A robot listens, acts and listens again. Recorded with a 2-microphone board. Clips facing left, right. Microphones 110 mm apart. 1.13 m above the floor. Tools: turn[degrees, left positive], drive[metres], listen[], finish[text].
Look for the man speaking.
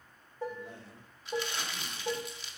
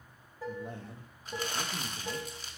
Thought: The man speaking: about 45° right or 135° right.
Action: turn[-45]
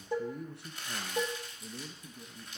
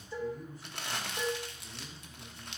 Thought: So it is at 75° left.
Action: turn[75]
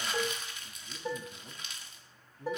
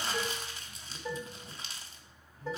Thought: The man speaking is now 60° left.
Action: turn[60]
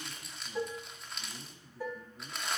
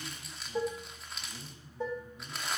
Thought: The man speaking is now 30° left.
Action: turn[30]
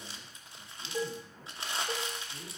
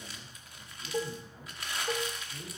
Action: finish[Found it: a man speaking, straight ahead, 2 to 4 m away.]